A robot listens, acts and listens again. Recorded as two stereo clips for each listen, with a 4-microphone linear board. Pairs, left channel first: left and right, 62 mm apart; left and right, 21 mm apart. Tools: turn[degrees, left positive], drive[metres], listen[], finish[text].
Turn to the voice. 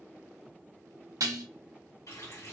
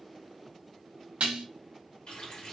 Action: listen[]
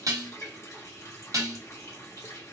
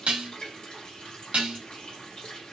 Action: listen[]
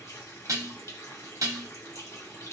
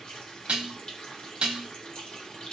Action: finish[I can't make out anyone speaking to turn to.]